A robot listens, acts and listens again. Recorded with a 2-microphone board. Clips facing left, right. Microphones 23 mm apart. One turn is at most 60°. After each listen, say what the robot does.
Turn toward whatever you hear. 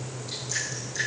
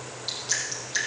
Turn 60° right.
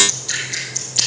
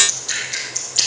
Turn 10° right.
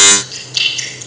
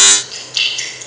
Found it: dripping, straight ahead, over 4 m away.